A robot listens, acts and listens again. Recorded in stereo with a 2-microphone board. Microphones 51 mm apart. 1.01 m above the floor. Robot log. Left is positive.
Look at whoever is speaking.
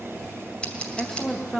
cmd yaw +30
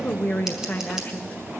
note: So it is at 140° left.
cmd yaw +140
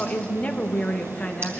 note: The woman speaking is now 30° left.
cmd yaw +30
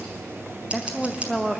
end: Facing the woman speaking.